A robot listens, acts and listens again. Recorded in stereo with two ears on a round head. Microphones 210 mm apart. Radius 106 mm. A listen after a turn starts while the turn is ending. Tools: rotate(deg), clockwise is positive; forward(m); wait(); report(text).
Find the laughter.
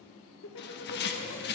rotate(-55)
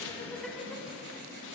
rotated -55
wait()
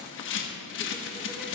wait()
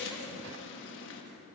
report("I heard laughter, but can't make it out now. It was about straight ahead or 70° left.")